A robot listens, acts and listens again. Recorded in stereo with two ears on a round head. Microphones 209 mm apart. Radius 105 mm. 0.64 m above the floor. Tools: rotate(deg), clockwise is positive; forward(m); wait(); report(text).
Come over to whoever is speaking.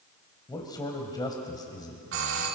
rotate(-20)
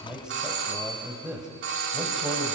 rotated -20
forward(1.0)
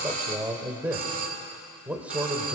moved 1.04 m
forward(1.0)
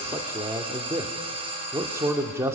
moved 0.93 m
rotate(15)
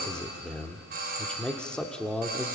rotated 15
forward(1.0)
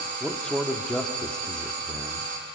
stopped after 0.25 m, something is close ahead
report("I am next to the man speaking.")